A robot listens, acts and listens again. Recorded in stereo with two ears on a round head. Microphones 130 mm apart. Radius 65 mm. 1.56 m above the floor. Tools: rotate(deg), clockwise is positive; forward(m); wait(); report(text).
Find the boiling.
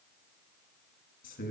wait()
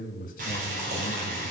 rotate(60)
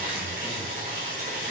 rotate(60)
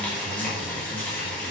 rotate(-10)
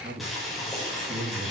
report("Found it: boiling, straight ahead.")